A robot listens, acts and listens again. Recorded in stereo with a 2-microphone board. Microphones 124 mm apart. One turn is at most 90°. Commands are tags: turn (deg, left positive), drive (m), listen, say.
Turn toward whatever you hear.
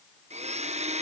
<turn deg="-65"/>
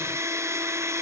<turn deg="-25"/>
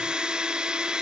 <say>Facing the blender.</say>